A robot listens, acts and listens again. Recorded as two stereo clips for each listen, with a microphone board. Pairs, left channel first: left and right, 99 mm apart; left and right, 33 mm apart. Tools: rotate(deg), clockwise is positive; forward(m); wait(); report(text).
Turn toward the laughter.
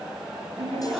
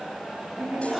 rotate(55)
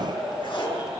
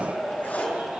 rotate(65)
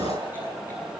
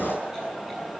wait()
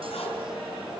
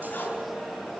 wait()
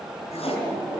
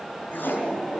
rotate(15)
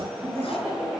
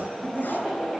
report("Found it: laughter, straight ahead, over 4 m away.")